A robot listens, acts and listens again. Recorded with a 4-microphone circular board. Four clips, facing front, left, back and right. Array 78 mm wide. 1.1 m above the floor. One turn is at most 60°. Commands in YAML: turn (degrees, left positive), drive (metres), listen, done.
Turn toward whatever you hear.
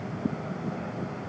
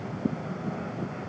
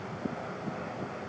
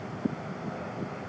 listen: true
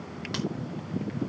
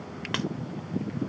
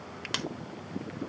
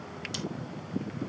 turn: 60
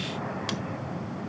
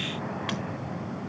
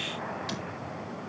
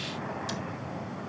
turn: 60
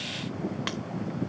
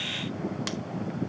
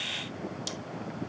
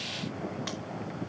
turn: 10
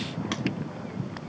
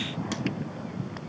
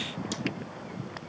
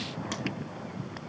listen: true
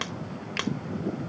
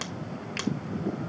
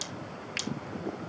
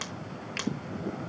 done: "Found it: scissors, straight ahead."